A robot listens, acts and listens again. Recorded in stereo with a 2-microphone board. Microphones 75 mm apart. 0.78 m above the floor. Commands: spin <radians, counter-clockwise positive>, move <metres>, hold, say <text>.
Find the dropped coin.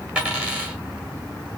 spin -0.26
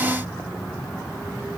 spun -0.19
hold
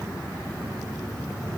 say I heard a dropped coin, but can't make it out now. It was about 5° right or 155° right.